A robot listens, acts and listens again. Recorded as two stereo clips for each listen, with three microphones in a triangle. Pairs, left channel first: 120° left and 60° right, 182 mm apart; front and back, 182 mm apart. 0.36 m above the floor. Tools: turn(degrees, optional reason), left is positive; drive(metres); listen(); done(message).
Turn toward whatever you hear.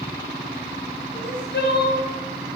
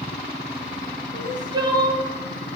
turn(degrees=115, reason="The crying: 115° left.")
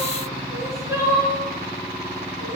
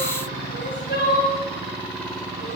turn(degrees=15, reason="The crying is now 15° left.")
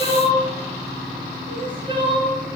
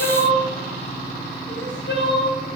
done("Found it: crying, straight ahead.")